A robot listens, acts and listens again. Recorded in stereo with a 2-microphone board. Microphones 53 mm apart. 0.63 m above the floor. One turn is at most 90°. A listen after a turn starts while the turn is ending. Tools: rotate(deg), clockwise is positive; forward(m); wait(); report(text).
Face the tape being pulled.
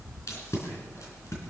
rotate(-90)
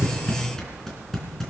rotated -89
rotate(-10)
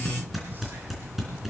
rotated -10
report("Found it: tape being pulled, straight ahead.")